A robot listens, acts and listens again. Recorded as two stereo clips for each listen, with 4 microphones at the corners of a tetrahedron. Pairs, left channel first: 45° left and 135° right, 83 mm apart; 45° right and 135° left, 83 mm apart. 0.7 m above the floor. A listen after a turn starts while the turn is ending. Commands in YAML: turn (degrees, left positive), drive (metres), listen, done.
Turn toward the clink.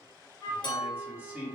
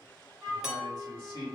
turn: 55
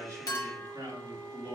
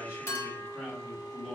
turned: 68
turn: -15
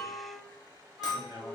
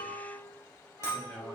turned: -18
listen: true
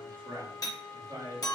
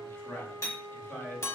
done: "Facing the clink."